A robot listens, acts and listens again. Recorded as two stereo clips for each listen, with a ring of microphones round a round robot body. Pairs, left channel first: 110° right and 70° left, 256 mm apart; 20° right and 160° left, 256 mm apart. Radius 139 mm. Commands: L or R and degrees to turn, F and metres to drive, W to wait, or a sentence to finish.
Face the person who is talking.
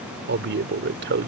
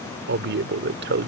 L110
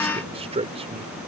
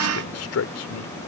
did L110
Found it: a man speaking, straight ahead.